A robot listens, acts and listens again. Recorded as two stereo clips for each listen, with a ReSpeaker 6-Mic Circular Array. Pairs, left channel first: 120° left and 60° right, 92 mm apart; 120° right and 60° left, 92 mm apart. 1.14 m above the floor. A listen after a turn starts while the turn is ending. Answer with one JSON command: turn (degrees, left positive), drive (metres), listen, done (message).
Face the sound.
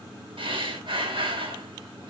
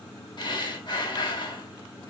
{"turn": -85}
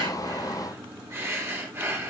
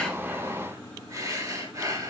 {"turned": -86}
{"done": "Facing the breathing."}